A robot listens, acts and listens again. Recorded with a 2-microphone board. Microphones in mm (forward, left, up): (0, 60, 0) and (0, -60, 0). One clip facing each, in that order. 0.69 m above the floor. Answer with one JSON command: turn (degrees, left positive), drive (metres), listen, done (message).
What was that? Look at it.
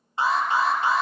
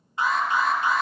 {"turn": 30}
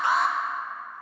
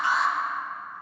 {"turn": 120}
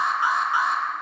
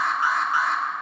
{"turn": 20}
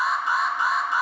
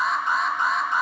{"done": "Facing the alarm."}